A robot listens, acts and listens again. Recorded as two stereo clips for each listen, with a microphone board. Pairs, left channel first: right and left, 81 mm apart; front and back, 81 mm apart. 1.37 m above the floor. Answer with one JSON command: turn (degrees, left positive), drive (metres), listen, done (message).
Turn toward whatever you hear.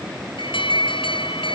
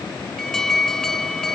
{"turn": -85}
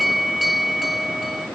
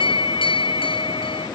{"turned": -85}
{"done": "Facing the alarm."}